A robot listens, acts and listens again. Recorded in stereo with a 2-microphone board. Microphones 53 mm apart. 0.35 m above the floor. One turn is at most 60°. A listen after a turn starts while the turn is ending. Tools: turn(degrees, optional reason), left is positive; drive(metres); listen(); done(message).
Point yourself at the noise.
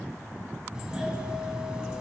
turn(degrees=-30)
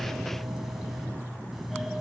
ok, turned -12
done("Found it: a doorbell, straight ahead.")